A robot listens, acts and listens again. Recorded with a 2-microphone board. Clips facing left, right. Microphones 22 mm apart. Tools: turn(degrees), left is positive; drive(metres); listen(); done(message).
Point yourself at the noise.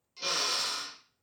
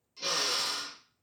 turn(degrees=20)
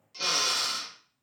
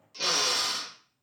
done("Found it: a drill, straight ahead, 1 to 2 m away.")